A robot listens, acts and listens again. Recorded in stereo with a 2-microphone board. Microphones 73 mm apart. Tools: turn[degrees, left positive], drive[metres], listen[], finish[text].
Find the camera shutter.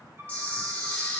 Thought: The camera shutter: about 20° left or 160° left.
Action: turn[20]
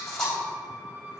Action: finish[Found it: a camera shutter, straight ahead, 2 to 4 m away.]